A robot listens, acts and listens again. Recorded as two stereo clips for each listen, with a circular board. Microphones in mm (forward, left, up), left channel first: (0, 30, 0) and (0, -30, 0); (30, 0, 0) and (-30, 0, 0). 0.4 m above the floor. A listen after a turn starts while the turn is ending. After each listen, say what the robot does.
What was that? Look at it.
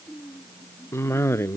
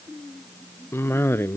Turn 50° left.
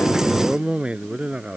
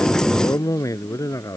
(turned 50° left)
Turn 20° right.
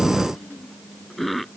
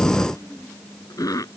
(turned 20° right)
Found it: a cough, straight ahead.